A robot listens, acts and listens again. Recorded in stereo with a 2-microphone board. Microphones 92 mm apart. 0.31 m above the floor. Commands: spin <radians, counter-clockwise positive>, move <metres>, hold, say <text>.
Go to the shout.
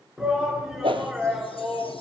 spin -0.52
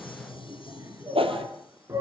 spin -2.53
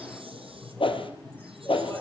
spin 0.26
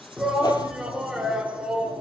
move 1.0
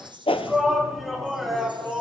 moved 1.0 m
move 1.0
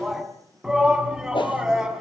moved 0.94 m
move 1.0
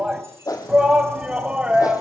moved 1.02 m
spin -0.17
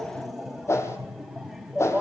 move 1.0
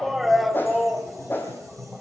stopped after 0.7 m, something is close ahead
say I am next to the shout.